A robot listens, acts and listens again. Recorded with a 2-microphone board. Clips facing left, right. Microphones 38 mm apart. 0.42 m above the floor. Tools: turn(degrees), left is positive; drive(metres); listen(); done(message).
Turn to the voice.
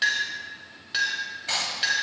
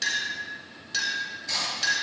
listen()
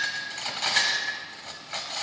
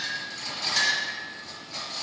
listen()
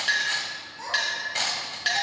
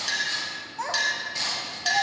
turn(degrees=-70)
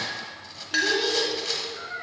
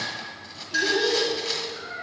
done("Found it: a child speaking, straight ahead, 1 to 2 m away.")